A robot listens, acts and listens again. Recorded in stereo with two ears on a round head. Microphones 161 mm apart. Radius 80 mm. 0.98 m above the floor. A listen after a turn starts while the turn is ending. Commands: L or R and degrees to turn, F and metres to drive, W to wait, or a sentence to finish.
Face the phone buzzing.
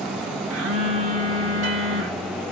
R90
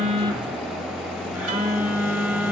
R10
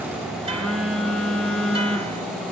Found it: a phone buzzing, straight ahead.